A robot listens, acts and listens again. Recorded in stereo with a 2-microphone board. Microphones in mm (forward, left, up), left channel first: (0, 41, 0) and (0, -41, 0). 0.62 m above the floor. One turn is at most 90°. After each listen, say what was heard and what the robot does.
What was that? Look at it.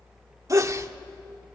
The sneeze: about 40° right or 140° right. Turn 40° right.
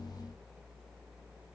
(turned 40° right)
Keep listening.
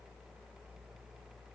I heard a sneeze, but can't make it out now. It was about straight ahead or 100° right.